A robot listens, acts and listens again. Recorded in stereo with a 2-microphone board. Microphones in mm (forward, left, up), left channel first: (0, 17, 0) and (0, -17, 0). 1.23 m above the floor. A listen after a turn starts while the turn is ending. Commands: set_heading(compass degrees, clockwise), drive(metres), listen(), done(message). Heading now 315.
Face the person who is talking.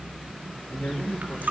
set_heading(225)
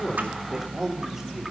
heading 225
set_heading(235)
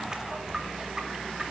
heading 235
listen()
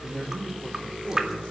done("Found it: a man speaking, straight ahead, over 4 m away.")